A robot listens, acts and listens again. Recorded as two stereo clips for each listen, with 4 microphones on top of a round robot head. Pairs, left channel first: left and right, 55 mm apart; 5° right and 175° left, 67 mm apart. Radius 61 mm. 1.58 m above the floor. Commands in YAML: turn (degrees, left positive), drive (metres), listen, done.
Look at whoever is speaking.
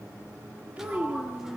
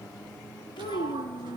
turn: -15
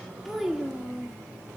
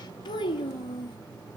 done: "Facing the child speaking."